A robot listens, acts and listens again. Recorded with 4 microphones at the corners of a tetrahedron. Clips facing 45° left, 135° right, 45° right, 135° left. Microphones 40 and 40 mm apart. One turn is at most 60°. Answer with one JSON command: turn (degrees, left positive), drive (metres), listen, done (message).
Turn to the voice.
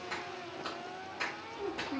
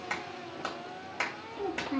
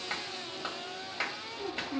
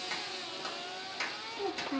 {"turn": 60}
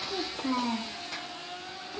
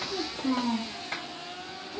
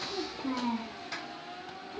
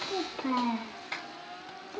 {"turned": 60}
{"turn": 60}
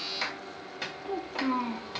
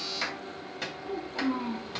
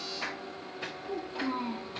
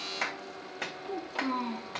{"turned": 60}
{"turn": 60}
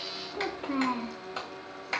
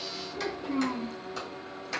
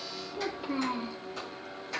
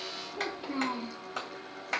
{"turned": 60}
{"turn": 35}
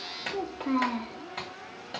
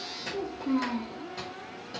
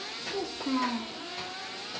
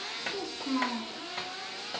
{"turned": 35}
{"turn": 25}
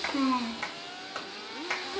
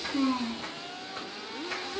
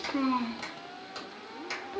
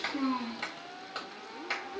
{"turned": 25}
{"done": "Found it: a child speaking, straight ahead, 1 to 2 m away."}